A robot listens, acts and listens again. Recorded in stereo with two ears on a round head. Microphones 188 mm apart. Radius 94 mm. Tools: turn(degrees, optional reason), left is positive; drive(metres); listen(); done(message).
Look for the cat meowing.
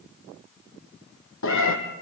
turn(degrees=70, reason="The cat meowing: about 70° left or 110° left.")
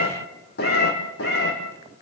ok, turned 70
turn(degrees=50, reason="So it is at 50° left.")
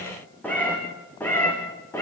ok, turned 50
turn(degrees=10, reason="The cat meowing is now 10° left.")
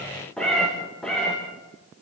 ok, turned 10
done("Found it: a cat meowing, straight ahead, over 4 m away.")